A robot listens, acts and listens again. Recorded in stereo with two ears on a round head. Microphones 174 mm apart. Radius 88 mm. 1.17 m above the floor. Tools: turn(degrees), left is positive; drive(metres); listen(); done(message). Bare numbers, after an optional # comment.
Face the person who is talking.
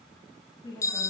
# The woman speaking: about 20° left or 160° left.
turn(20)
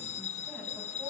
listen()
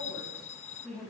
turn(30)
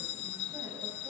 listen()
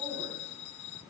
listen()
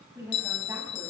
# So it is at 15° right.
turn(-15)
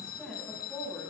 done("Facing the woman speaking.")